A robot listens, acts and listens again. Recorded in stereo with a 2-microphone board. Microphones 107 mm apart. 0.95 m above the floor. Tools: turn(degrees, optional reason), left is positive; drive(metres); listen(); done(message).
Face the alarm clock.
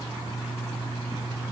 listen()
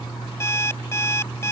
turn(degrees=25, reason="The alarm clock: about 25° left or 155° left.")
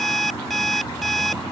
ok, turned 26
done("Found it: an alarm clock, straight ahead.")